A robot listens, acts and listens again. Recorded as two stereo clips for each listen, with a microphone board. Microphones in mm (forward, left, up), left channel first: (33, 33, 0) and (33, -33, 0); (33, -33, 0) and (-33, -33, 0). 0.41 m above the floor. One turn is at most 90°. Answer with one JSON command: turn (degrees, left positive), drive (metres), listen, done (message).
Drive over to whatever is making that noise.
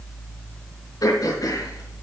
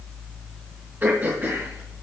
{"turn": 90}
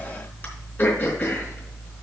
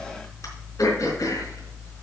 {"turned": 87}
{"turn": 35}
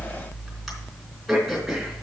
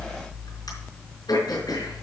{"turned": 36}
{"drive": 1.0}
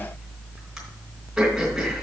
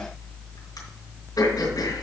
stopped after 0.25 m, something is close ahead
{"done": "Something is in my way. I am facing the throat clearing but have not reached it."}